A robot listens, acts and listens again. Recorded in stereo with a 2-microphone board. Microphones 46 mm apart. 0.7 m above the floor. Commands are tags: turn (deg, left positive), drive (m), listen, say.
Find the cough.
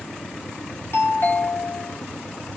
<listen/>
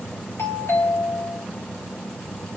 <listen/>
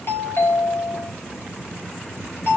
<say>I can't make out a cough to turn to.</say>